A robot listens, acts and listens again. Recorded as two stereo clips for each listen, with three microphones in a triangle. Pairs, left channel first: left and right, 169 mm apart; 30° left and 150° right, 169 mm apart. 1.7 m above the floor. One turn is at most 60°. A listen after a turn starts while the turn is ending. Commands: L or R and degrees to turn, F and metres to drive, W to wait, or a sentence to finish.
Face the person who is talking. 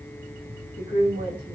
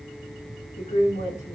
L60
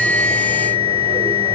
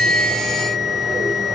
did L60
L15
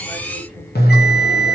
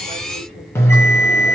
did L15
W
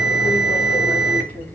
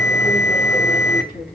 L10
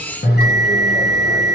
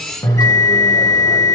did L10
W
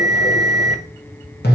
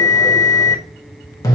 W
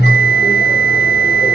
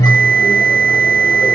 Facing where the woman speaking came from. I can't hear it now.